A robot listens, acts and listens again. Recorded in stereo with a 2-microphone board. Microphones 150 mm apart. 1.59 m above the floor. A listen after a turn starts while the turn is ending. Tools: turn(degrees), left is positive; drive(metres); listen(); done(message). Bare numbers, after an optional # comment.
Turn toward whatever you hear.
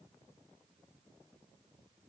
listen()
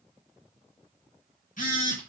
# The phone buzzing: about 60° left or 120° left.
turn(60)
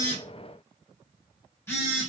# So it is at 20° left.
turn(20)
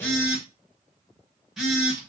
done("Facing the phone buzzing.")